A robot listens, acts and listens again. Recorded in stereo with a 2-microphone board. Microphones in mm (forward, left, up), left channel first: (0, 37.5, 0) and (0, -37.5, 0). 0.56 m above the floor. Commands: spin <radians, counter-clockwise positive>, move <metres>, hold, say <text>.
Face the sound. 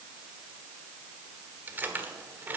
spin -0.44
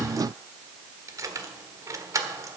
spin -2.27
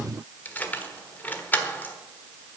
spin 0.44
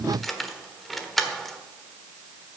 say Facing the keys jangling, 1 to 2 m away.